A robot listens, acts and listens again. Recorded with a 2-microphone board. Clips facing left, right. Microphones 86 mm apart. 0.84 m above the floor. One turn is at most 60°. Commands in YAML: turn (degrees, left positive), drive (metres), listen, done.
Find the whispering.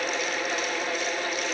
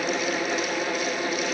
listen: true
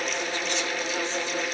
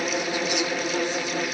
listen: true
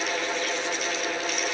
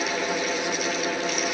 done: "I can't make out whispering to turn to."